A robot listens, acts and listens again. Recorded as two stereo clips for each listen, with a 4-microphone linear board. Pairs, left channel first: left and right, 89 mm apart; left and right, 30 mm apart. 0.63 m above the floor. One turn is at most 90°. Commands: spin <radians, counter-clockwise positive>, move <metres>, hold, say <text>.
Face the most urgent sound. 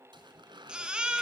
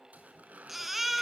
spin -0.52
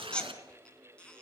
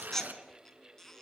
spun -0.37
spin 0.17
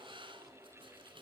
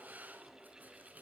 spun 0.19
hold
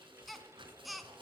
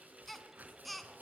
say Found it: a baby crying, straight ahead, 2 to 4 m away.